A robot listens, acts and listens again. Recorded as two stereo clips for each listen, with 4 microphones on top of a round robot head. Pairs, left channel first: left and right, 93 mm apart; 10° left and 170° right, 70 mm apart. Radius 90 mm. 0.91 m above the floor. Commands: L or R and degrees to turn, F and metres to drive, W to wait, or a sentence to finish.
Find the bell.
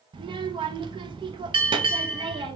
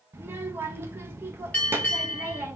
R70
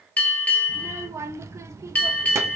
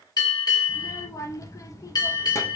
L15
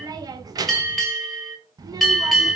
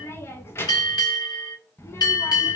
Facing the bell.